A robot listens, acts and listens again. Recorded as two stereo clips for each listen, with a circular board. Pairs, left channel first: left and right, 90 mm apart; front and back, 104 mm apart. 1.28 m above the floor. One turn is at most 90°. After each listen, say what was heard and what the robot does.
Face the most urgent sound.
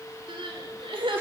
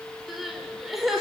The crying: 95° right. Turn 90° right.
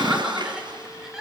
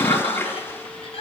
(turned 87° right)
The crying is now 10° right. Turn 10° right.
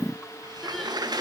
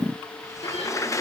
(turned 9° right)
Keep listening.
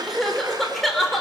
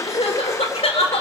Facing the crying, 2 to 4 m away.